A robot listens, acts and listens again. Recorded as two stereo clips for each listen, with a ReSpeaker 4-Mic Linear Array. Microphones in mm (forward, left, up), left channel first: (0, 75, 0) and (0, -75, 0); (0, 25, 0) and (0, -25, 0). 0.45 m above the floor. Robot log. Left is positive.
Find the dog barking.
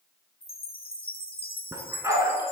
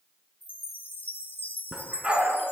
note: The dog barking: about 20° right or 160° right.
cmd yaw -20
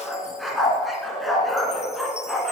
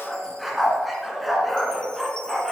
end: Found it: a dog barking, straight ahead, 1 to 2 m away.